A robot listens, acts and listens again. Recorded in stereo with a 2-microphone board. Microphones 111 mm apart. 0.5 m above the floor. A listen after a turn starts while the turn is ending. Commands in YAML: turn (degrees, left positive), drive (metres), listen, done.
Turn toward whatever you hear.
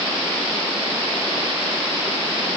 listen: true
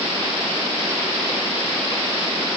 listen: true
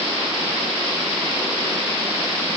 done: "I can't make out anything to turn to."